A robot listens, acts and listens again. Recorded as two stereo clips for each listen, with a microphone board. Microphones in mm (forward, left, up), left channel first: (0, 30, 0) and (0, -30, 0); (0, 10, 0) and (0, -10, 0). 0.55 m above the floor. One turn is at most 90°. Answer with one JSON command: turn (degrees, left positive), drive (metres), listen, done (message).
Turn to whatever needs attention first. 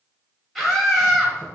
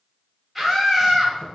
{"turn": 30}
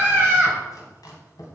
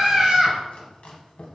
{"turn": -35}
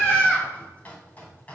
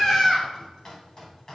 {"turn": 25}
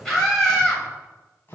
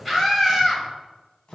{"done": "Facing the scream."}